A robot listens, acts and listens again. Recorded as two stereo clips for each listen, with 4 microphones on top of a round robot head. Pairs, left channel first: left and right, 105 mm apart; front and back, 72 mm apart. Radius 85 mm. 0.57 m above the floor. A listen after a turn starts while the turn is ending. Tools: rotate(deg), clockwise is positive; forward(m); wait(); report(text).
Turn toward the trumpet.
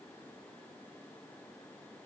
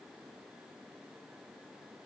wait()
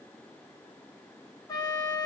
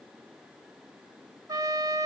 rotate(-145)
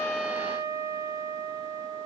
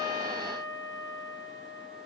rotate(35)
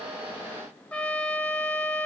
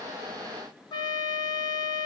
rotate(-10)
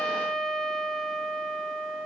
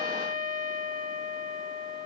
report("Found it: a trumpet, straight ahead, under 1 m away.")